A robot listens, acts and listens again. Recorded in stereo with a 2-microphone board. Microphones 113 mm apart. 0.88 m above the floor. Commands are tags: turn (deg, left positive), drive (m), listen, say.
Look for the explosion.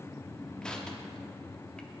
<listen/>
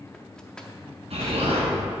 <turn deg="-90"/>
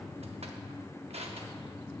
<say>Facing where the explosion came from. I can't hear it now.</say>